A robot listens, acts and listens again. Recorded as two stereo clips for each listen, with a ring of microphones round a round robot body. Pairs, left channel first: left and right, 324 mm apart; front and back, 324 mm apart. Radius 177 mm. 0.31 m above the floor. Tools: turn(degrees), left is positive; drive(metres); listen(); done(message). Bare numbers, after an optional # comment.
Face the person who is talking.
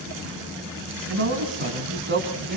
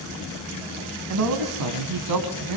# The man speaking: 155° right.
turn(-155)
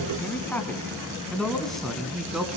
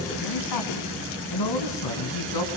done("Facing the man speaking, 2 to 4 m away.")